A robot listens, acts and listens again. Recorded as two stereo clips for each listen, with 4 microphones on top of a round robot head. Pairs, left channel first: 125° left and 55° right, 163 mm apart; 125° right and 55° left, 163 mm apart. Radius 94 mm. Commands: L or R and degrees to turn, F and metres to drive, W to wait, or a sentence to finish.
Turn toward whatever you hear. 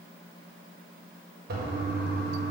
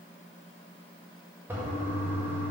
R25
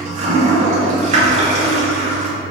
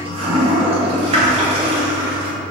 Found it: a toilet flushing, straight ahead.